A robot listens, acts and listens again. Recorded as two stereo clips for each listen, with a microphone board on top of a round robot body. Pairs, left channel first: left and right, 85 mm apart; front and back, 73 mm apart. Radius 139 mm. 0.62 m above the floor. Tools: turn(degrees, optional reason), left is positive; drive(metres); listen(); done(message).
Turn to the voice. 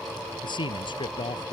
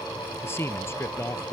turn(degrees=60, reason="The man speaking: 60° left.")
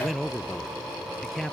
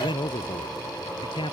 done("Found it: a man speaking, straight ahead.")